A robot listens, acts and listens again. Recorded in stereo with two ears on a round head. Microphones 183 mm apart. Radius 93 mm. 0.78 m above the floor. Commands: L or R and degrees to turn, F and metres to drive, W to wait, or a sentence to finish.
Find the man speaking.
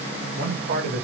R50
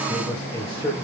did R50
L10
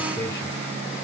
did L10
L10
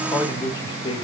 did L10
L25
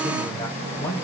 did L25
L20
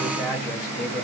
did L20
L10
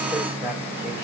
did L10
W
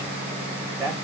Found it: a man speaking, straight ahead, 1 to 2 m away.